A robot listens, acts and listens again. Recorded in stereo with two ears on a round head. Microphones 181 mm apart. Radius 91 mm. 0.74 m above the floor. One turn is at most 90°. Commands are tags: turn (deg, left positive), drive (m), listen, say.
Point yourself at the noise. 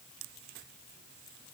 <listen/>
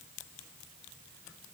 <listen/>
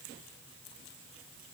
<say>I can't make out anything.</say>